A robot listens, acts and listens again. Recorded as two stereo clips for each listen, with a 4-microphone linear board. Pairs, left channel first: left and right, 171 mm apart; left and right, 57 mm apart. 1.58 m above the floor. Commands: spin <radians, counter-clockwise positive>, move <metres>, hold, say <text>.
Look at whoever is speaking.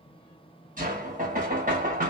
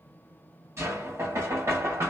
hold
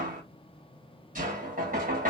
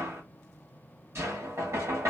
hold
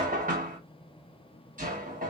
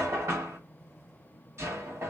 say I can't make out anyone speaking, only knocking.